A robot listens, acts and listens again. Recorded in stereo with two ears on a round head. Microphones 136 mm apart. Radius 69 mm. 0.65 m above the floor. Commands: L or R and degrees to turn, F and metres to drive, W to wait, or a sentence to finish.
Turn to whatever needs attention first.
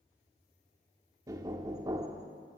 W
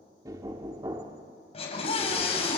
L45
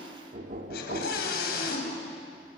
L90
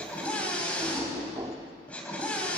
L10
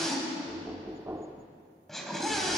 Found it: a scream, straight ahead, over 4 m away.